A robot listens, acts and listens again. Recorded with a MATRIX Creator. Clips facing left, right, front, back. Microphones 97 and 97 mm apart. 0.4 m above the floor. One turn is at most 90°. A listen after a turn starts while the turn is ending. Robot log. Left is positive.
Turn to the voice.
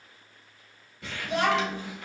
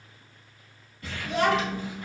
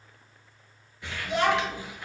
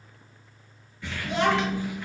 note: The child speaking: 110° left.
cmd yaw +90
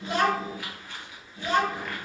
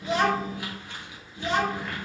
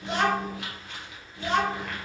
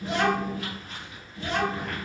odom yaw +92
end: Found it: a child speaking, straight ahead.